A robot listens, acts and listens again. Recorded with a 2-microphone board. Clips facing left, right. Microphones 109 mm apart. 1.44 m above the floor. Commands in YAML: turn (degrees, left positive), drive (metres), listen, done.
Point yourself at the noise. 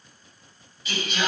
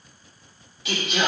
turn: -90
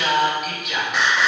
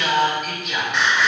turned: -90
done: "Found it: singing, straight ahead, over 4 m away."